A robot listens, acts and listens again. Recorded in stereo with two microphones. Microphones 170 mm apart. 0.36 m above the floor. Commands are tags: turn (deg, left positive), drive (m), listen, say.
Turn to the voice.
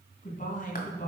<turn deg="50"/>
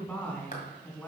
<say>Found it: a man speaking, straight ahead.</say>